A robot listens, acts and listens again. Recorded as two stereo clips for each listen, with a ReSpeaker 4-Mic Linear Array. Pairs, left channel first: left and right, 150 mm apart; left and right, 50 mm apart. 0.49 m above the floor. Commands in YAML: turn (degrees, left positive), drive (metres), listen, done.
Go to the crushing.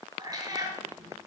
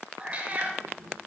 listen: true
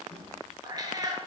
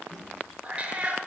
listen: true
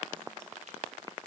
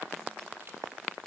done: "I can't make out crushing to turn to."